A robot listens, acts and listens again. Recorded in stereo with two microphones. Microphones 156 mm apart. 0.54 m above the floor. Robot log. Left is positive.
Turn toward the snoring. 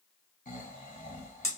note: The snoring: about 55° left or 125° left.
cmd yaw +55
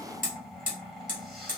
end: Found it: snoring, straight ahead, 1 to 2 m away.